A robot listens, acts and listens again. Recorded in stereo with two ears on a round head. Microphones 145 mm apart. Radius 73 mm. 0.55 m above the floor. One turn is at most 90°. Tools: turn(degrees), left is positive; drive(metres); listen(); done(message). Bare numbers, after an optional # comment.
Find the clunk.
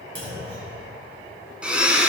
# The clunk: about 30° right or 150° right.
turn(-30)
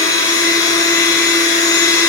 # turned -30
listen()
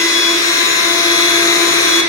done("I heard a clunk, but can't make it out now. It was about straight ahead or 120° right.")